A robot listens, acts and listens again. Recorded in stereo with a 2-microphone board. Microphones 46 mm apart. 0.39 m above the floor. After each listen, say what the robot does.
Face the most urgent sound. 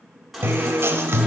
Turn 30° left.
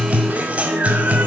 Keep listening.
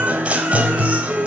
Turn 30° right.
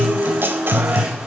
Keep listening.
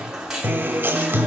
Turn 10° right.
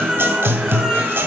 Facing the baby crying, 1 to 2 m away.